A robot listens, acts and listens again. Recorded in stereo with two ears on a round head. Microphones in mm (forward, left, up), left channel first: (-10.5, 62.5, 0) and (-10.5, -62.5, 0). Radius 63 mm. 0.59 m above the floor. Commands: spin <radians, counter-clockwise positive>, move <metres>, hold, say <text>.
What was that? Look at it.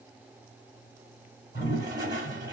spin -0.52
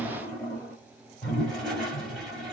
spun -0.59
say Found it: a toilet flushing, straight ahead, 2 to 4 m away.